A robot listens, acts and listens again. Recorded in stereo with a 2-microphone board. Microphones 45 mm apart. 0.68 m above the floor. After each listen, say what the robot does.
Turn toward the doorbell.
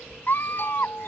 Turn 55° left.
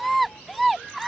Keep listening.
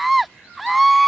Keep listening.
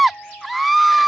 Turn 65° left.
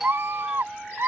Turn 10° right.
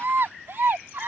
Keep listening.
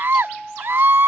Found it: a doorbell, straight ahead.